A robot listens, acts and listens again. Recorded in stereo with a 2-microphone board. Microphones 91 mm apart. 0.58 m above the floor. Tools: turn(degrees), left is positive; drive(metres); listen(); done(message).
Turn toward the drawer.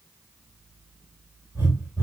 listen()
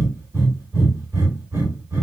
listen()
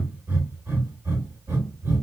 done("I can't make out a drawer, only breathing.")